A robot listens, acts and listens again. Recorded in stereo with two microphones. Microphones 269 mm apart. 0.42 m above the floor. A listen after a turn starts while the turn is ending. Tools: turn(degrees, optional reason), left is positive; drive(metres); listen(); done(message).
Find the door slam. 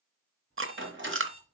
turn(degrees=-45, reason="The door slam: about 45° right or 135° right.")
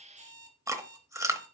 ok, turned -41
listen()
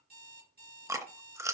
done("I heard a door slam, but can't make it out now. It was about 5° right or 95° right.")